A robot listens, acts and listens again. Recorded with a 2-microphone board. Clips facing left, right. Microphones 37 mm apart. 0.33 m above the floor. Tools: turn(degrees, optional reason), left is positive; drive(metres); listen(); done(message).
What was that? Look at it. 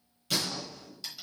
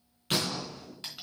turn(degrees=-45, reason="The gunshot: about 45° right or 135° right.")
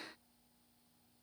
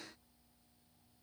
listen()
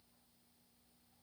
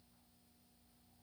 done("I heard a gunshot, but can't make it out now. It was about straight ahead or 90° right.")